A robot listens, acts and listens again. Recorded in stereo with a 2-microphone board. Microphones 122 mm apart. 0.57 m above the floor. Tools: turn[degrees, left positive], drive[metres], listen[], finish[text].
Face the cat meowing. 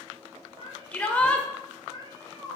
Thought: The cat meowing: about 30° right or 150° right.
Action: turn[-30]
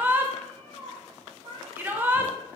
Thought: So it is at 135° right.
Action: turn[-135]
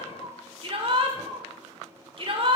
Thought: The cat meowing is now 40° right.
Action: turn[-40]
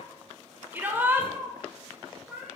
Action: finish[Found it: a cat meowing, straight ahead, 2 to 4 m away.]